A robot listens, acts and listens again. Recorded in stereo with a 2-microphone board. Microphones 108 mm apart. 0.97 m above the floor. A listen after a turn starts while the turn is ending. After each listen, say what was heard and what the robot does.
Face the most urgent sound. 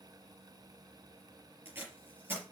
Keep listening.
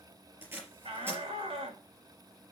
The shout: about 75° right or 105° right. Turn 75° right.
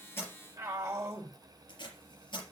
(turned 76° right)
So it is at 30° right. Turn 30° right.
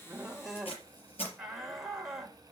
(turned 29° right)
Facing the shout, 2 to 4 m away.